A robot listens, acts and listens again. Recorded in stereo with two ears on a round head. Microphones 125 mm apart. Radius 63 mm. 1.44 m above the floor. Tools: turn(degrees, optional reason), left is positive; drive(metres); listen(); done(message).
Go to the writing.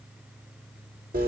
listen()
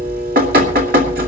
listen()
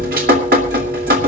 done("I can't make out writing, only dripping.")